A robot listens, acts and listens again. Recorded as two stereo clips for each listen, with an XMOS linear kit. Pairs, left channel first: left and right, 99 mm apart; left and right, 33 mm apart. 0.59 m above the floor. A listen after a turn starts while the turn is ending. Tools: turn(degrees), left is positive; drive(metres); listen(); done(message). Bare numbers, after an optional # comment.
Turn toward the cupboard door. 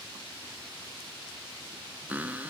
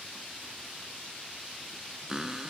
# The cupboard door: about 15° right or 165° right.
turn(-15)
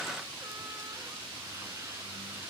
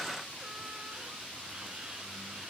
listen()
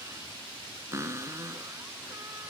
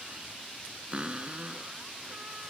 # So it is at 150° right.
turn(-150)
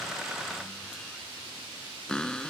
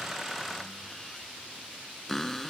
done("Found it: a cupboard door, straight ahead.")